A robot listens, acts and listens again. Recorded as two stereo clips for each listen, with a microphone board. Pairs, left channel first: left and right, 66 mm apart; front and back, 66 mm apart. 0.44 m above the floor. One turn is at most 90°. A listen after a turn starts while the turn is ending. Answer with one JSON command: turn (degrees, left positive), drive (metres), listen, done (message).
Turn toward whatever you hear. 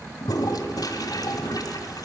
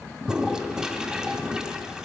{"turn": 90}
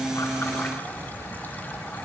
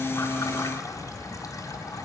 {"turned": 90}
{"turn": 10}
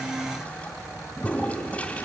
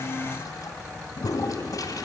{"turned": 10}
{"turn": 20}
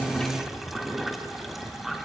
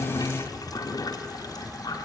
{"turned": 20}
{"done": "Found it: a toilet flushing, straight ahead, 1 to 2 m away."}